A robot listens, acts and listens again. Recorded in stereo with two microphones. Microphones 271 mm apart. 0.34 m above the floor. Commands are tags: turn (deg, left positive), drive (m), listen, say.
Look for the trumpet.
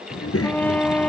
<turn deg="30"/>
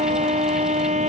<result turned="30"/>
<turn deg="-25"/>
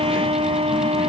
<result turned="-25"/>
<turn deg="-20"/>
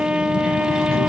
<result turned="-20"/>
<say>Facing the trumpet.</say>